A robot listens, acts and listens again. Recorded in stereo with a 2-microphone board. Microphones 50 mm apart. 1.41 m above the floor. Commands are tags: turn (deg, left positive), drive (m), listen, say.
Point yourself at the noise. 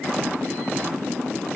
<listen/>
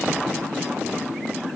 <listen/>
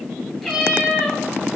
<turn deg="30"/>
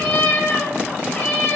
<turn deg="145"/>
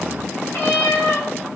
<turn deg="50"/>
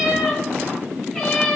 <say>Facing the cat meowing.</say>